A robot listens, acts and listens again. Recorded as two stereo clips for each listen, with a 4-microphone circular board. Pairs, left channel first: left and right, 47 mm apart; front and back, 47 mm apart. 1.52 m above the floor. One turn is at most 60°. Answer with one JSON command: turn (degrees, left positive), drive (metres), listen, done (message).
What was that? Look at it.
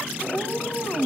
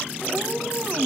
{"turn": 60}
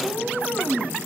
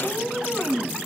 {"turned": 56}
{"turn": 60}
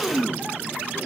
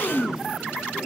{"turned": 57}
{"turn": 15}
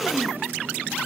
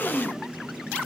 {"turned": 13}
{"listen": true}
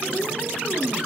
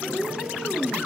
{"done": "Found it: a cat meowing, straight ahead."}